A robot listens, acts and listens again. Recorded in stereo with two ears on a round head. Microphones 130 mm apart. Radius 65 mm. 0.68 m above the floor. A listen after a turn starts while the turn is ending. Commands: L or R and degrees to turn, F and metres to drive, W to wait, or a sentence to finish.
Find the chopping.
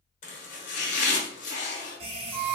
L55
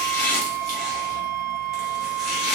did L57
Facing the chopping, 1 to 2 m away.